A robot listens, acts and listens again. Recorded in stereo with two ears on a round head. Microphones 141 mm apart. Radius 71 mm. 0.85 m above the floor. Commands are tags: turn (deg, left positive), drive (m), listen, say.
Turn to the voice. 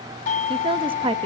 <turn deg="-35"/>
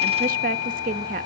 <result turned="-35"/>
<turn deg="-105"/>
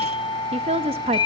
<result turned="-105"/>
<turn deg="-45"/>
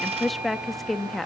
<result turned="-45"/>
<say>Found it: a woman speaking, straight ahead, under 1 m away.</say>